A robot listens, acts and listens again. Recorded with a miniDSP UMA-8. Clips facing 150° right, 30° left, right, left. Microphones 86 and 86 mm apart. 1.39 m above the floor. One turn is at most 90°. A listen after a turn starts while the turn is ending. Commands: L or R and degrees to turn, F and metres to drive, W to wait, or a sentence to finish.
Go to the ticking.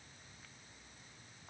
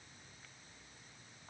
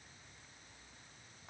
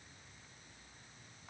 W
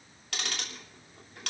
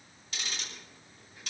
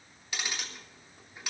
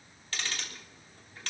R90
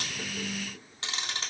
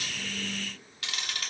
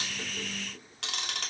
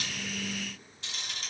R90
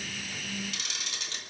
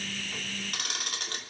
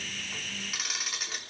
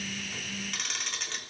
F1.0
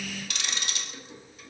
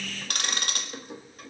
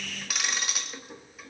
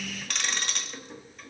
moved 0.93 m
F1.0
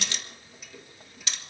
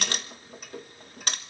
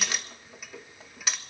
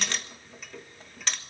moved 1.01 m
F1.0
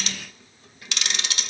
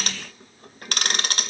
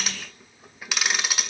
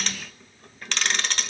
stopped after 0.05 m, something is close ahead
Arrived at the ticking, straight ahead.